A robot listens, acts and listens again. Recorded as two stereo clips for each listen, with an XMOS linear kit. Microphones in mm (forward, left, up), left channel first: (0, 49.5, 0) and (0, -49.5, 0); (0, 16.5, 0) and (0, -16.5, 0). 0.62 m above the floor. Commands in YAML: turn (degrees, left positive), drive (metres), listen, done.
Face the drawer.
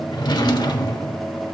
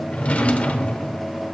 turn: 50
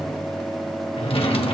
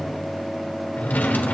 turn: 85
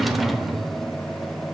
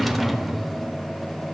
done: "Facing the drawer."